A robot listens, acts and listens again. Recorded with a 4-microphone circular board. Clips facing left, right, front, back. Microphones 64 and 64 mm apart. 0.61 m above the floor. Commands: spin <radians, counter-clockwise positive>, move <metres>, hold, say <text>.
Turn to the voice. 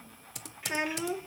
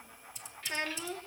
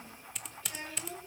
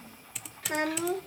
spin 2.88
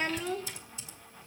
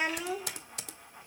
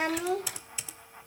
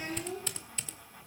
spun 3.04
spin -0.17
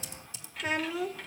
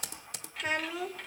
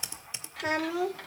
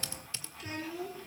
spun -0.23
say Found it: a child speaking, straight ahead.